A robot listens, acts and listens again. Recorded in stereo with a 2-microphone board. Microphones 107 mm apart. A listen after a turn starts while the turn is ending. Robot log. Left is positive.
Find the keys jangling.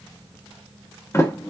cmd idle
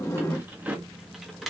cmd yaw +30
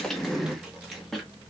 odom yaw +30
cmd yaw +30
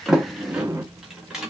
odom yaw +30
cmd yaw -30
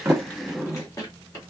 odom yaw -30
note: So it is at 30° left.
cmd yaw +30
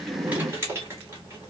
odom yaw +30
note: The keys jangling is now 25° right.
cmd yaw -25
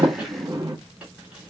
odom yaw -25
cmd idle
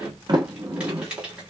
note: The keys jangling is now 10° right.
cmd yaw -10
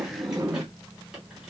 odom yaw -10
cmd idle
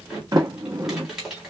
end: Facing the keys jangling.